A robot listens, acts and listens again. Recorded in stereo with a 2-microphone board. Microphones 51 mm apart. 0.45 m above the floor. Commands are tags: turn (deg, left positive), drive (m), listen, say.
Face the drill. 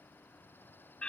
<listen/>
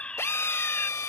<turn deg="60"/>
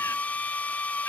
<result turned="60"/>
<turn deg="35"/>
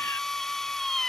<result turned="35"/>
<turn deg="10"/>
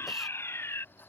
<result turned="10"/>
<listen/>
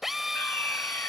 <say>Found it: a drill, straight ahead.</say>